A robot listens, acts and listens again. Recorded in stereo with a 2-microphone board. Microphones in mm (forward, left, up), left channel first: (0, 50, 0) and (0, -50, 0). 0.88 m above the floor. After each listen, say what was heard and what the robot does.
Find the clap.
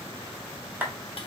The clap: about 20° right or 160° right. Turn 20° right.
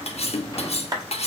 So it is at 140° right. Turn 140° right.
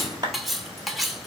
The clap is now 40° right. Turn 40° right.
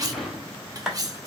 Facing the clap, 1 to 2 m away.